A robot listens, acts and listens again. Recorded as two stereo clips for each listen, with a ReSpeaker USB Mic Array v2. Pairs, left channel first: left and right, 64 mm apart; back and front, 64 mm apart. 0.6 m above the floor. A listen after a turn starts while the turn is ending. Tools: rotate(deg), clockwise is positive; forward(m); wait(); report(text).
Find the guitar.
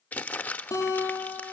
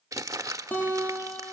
rotate(-115)
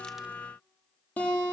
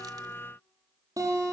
rotate(-25)
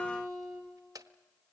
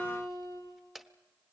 report("Found it: a guitar, straight ahead.")